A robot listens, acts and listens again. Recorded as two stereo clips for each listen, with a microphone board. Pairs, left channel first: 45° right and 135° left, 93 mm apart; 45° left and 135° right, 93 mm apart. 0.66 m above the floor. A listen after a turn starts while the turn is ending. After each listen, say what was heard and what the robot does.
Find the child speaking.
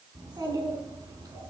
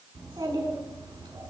The child speaking: 175° right. Turn 175° right.
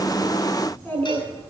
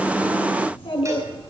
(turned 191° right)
The child speaking is now 25° left. Turn 25° left.
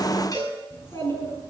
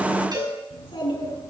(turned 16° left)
The child speaking is now 15° left. Turn 15° left.
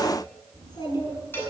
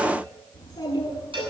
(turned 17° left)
Found it: a child speaking, straight ahead.